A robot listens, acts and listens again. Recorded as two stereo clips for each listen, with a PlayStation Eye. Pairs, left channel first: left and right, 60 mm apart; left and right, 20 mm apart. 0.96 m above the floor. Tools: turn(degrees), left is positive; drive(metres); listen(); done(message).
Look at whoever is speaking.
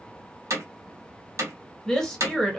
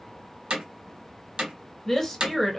turn(degrees=30)
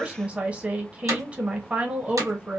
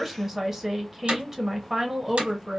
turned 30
turn(degrees=-20)
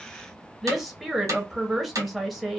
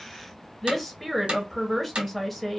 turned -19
done("Found it: a woman speaking, straight ahead.")